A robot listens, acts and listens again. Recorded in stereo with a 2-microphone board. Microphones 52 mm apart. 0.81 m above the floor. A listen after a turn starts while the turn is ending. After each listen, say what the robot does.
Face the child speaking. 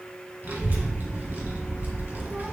Turn 35° right.
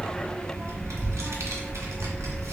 Turn 110° right.
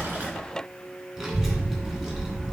Turn 15° right.
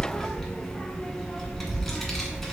Found it: a child speaking, straight ahead, 1 to 2 m away.